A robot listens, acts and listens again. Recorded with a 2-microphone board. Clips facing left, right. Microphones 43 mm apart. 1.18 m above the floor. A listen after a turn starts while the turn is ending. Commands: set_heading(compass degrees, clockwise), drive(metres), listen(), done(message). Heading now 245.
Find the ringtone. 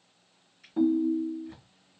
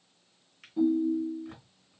set_heading(180)
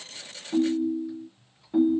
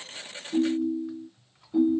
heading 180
set_heading(135)
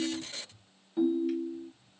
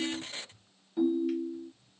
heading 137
done("Found it: a ringtone, straight ahead.")